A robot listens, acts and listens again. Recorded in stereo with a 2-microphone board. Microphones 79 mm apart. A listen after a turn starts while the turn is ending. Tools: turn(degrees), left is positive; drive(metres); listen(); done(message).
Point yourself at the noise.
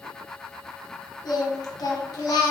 turn(degrees=55)
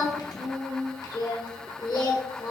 turn(degrees=65)
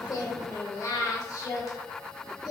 turn(degrees=50)
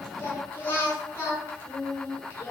turn(degrees=30)
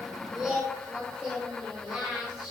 done("Found it: singing, straight ahead.")